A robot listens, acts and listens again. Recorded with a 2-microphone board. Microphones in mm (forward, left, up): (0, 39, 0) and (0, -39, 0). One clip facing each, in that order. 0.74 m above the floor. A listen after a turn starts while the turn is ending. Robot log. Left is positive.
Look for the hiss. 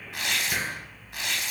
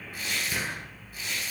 note: The hiss: about 45° left or 135° left.
cmd yaw +45
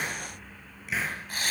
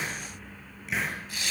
end: Found it: a hiss, straight ahead, over 4 m away.